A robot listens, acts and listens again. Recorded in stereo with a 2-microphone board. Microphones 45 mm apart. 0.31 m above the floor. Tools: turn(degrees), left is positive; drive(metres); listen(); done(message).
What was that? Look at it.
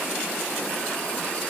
listen()
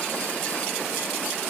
listen()
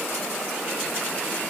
done("I can't make out anything to turn to.")